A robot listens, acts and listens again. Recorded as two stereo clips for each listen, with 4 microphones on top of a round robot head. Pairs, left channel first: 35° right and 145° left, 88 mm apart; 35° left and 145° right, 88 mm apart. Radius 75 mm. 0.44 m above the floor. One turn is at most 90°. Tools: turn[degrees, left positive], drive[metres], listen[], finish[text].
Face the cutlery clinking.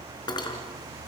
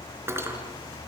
Thought: The cutlery clinking: 80° right.
Action: turn[-80]
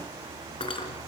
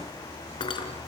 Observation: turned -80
Action: finish[Found it: cutlery clinking, straight ahead, over 4 m away.]